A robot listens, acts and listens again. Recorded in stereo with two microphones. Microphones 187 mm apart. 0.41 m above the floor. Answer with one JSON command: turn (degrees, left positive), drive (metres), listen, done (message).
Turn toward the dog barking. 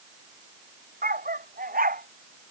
{"turn": -55}
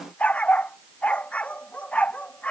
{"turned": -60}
{"done": "Facing the dog barking."}